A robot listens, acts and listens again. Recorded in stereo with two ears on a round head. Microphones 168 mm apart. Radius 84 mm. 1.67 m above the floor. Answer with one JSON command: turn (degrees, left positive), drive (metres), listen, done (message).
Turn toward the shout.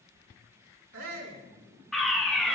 {"turn": -90}
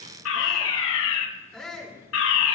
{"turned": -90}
{"done": "Facing the shout."}